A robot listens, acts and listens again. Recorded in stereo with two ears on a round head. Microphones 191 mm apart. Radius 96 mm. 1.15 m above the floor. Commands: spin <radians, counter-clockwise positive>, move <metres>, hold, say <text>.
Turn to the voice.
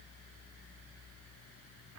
hold
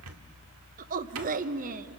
spin -0.61
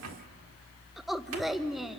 say Found it: a woman speaking, straight ahead, under 1 m away.